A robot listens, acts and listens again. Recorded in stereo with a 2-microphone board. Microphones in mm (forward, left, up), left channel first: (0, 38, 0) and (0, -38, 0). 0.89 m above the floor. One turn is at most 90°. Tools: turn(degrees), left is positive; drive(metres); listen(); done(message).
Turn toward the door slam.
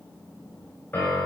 listen()
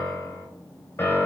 listen()
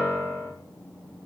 done("I can't make out a door slam to turn to.")